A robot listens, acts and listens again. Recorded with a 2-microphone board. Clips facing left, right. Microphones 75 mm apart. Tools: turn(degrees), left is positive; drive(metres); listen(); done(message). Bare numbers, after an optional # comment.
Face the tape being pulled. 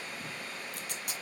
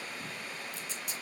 # The tape being pulled: about 65° left or 115° left.
turn(65)
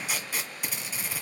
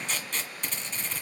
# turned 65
# So it is at 10° left.
turn(10)
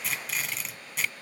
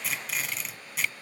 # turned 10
done("Facing the tape being pulled, 1 to 2 m away.")